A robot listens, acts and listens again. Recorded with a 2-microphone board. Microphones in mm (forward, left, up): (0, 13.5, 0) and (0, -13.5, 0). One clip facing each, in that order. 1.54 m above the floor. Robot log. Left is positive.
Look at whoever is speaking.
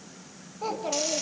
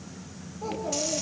note: The child speaking: about 70° left or 110° left.
cmd yaw +70
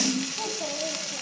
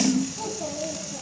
note: So it is at 30° left.
cmd yaw +30
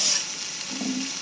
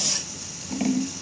cmd idle
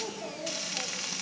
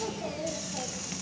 note: The child speaking is now 10° left.
cmd yaw +10
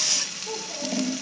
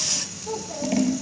note: The child speaking is now 10° right.
cmd yaw -10
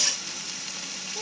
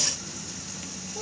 cmd idle
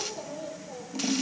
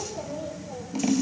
end: Found it: a child speaking, straight ahead, over 4 m away.